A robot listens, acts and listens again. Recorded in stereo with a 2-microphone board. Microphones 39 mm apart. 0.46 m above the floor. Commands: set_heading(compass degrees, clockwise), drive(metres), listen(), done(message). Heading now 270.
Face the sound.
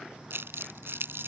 set_heading(0)
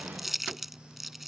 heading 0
done("Facing the crumpling.")